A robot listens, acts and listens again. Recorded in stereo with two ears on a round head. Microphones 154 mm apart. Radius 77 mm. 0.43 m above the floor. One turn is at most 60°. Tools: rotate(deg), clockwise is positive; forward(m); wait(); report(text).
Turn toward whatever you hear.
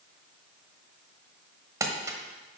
rotate(20)
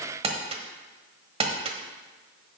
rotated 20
rotate(60)
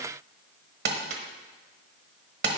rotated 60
rotate(60)
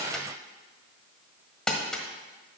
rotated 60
report("Found it: crumpling, straight ahead.")